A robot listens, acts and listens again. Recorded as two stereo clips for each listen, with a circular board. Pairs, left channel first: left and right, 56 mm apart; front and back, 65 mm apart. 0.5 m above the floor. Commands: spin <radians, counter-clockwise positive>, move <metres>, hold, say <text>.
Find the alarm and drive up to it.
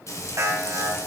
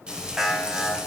spin -1.66
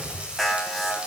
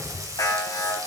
move 1.0
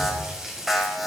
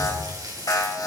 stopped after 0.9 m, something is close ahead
say Something is in my way. I am facing the alarm but have not reached it.